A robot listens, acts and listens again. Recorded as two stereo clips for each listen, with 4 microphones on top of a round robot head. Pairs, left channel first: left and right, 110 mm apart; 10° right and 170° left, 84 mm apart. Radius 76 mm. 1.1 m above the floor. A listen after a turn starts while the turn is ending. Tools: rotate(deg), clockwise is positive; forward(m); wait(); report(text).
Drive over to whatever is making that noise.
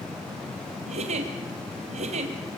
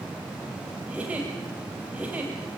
rotate(110)
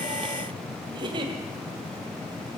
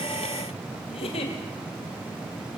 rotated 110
rotate(35)
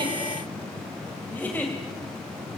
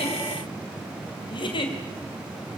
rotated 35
rotate(-10)
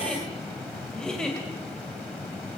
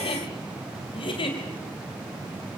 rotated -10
forward(1.0)
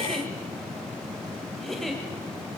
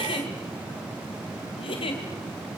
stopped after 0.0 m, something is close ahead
report("Something is in my way. I am facing the giggle but have not reached it.")